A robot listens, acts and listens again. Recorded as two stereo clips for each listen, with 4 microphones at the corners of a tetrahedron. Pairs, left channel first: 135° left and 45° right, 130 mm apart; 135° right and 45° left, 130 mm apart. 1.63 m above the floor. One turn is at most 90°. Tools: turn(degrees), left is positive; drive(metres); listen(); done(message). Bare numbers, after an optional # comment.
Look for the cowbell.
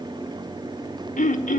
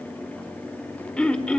listen()
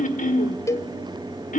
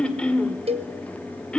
# The cowbell: 70° left.
turn(70)
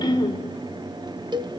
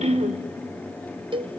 done("Found it: a cowbell, straight ahead, 1 to 2 m away.")